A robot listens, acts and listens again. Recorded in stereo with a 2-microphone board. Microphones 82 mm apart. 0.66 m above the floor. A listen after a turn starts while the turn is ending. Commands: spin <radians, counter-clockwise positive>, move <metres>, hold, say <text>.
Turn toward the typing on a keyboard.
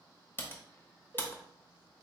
spin 0.44
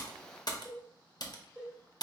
spin 2.27
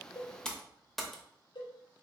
say Facing the typing on a keyboard.